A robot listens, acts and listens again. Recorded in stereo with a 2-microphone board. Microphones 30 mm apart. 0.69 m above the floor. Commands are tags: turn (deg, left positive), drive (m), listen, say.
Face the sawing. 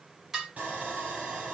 <turn deg="-55"/>
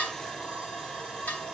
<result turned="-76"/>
<turn deg="25"/>
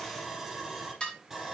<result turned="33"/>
<turn deg="-10"/>
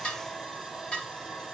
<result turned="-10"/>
<say>Facing the sawing, over 4 m away.</say>